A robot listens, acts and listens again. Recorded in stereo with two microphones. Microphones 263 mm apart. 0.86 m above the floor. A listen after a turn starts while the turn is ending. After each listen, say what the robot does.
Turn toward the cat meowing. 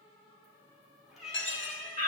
Turn 30° right.
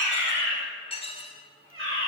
Turn 120° right.
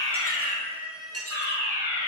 Facing the cat meowing.